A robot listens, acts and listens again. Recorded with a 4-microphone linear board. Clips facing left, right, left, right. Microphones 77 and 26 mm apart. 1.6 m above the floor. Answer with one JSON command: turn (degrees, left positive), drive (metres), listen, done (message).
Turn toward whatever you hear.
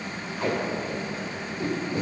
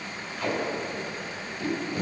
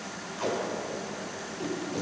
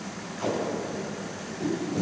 {"turn": 30}
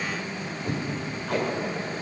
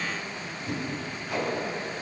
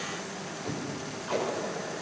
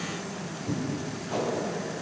{"turn": 120}
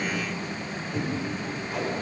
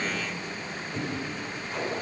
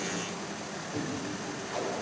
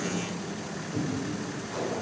{"done": "Facing the tape being pulled, over 4 m away."}